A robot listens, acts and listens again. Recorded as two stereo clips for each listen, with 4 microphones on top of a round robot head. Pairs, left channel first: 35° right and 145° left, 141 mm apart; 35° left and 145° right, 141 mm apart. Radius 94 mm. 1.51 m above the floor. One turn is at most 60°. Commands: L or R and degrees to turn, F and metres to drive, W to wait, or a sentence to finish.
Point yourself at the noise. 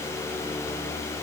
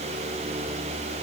W
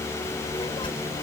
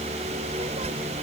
R60
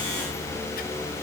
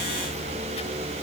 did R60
R35
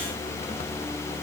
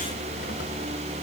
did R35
W
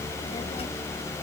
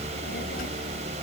L15
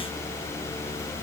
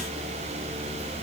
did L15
W
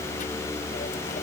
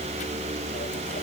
W
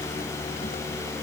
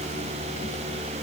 Facing where the child speaking came from. I can't hear it now.